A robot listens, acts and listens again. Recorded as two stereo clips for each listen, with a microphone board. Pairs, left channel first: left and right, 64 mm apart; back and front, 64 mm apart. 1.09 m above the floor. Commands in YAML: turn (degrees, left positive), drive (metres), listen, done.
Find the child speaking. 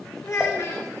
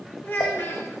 turn: 135
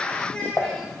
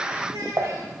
turn: 20
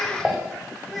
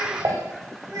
done: "Found it: a child speaking, straight ahead, 2 to 4 m away."